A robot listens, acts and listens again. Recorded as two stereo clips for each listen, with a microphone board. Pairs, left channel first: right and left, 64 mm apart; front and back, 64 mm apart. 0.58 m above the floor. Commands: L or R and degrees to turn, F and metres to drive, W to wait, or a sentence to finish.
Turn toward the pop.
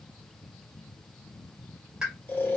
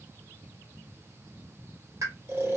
L170
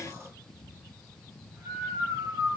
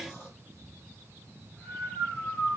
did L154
L15
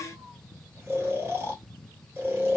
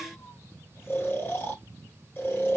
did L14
Facing where the pop came from. I can't hear it now.